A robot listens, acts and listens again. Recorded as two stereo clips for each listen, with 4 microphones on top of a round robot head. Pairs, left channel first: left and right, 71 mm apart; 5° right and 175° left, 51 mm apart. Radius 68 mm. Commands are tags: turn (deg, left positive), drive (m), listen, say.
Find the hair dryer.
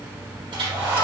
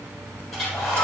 <turn deg="-95"/>
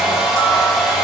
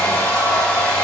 <say>Found it: a hair dryer, straight ahead, over 4 m away.</say>